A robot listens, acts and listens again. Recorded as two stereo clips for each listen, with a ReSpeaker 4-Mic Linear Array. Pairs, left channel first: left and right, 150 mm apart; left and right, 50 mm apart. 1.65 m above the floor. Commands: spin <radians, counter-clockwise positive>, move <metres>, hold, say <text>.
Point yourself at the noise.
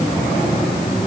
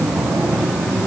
hold
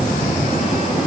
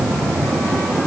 hold
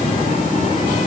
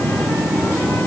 say I can't make out anything.